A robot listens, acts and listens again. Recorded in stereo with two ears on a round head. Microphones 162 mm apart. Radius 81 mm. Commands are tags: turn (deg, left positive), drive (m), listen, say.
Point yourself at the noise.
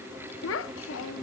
<turn deg="90"/>
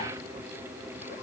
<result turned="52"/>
<turn deg="40"/>
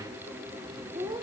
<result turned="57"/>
<turn deg="-20"/>
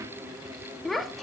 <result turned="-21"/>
<say>Facing the child speaking, 1 to 2 m away.</say>